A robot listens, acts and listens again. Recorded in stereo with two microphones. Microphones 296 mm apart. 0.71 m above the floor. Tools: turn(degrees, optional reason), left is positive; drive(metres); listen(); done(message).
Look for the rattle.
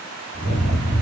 turn(degrees=-60, reason="The rattle: about 60° right or 120° right.")
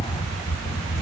turn(degrees=-10, reason="So it is at 10° right.")
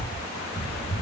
done("Facing the rattle.")